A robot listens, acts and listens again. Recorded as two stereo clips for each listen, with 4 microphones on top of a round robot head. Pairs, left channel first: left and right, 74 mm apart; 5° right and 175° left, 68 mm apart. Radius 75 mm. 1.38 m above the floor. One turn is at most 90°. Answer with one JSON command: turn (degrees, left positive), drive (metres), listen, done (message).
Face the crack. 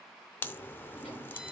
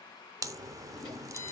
{"turn": 90}
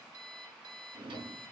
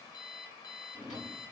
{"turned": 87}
{"turn": 65}
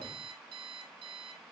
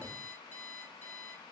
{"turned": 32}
{"turn": 35}
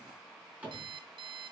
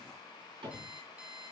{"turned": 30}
{"done": "Facing where the crack came from. I can't hear it now."}